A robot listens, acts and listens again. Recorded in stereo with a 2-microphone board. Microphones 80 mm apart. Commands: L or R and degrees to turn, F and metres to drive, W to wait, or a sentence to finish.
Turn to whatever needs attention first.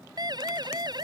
R65
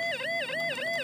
Facing the siren.